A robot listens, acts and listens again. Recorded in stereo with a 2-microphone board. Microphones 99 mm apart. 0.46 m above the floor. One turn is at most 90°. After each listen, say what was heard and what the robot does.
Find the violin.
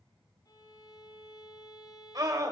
The violin: about 45° left or 135° left. Turn 45° left.
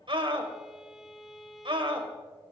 Found it: a violin, straight ahead.